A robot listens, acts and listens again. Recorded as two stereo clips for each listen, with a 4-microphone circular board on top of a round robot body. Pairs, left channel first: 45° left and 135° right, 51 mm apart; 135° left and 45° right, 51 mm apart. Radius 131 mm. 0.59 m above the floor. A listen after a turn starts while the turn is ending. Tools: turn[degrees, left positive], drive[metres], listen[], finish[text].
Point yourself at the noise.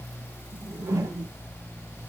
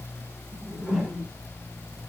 Thought: The whoosh: 130° right.
Action: turn[-130]
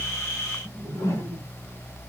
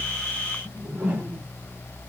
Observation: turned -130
Thought: The whoosh is now 15° left.
Action: turn[15]
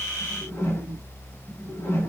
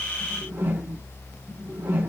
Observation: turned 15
Action: finish[Found it: a whoosh, straight ahead, 1 to 2 m away.]